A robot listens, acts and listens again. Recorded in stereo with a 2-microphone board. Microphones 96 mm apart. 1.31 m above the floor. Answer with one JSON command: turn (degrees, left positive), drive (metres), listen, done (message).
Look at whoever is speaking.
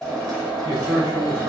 {"turn": -60}
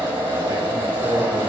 {"turn": -60}
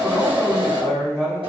{"done": "Facing the man speaking."}